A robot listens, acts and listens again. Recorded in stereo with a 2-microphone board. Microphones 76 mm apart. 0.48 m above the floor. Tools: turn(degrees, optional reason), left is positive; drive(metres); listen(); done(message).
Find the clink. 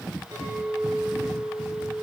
turn(degrees=-65, reason="The clink: about 65° right or 115° right.")
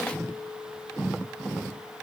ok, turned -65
turn(degrees=-45, reason="So it is at 45° right.")
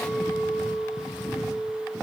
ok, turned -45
done("Found it: a clink, straight ahead, over 4 m away.")